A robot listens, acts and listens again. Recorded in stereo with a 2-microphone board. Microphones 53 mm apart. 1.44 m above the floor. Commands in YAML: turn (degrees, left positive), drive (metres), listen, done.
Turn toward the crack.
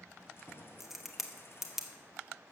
turn: -30
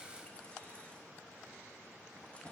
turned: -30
listen: true
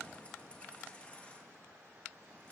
done: "I heard a crack, but can't make it out now. It was about 25° left or 145° right."